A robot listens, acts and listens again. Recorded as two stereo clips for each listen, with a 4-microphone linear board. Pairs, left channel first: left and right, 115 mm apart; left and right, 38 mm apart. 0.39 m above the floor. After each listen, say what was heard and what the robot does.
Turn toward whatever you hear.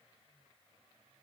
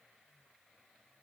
Keep listening.
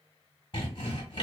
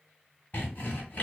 The sawing: about 50° left or 130° left. Turn 50° left.
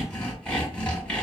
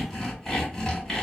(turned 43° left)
So it is at 10° left. Turn 10° left.
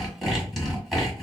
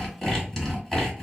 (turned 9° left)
Found it: sawing, straight ahead.